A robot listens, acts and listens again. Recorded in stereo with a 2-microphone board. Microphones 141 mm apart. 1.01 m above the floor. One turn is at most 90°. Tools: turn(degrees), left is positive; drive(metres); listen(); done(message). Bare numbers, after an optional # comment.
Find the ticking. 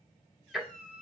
turn(30)
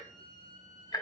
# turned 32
# So it is at 150° left.
turn(90)
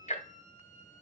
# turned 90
# The ticking is now 60° left.
turn(60)
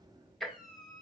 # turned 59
done("Found it: ticking, straight ahead.")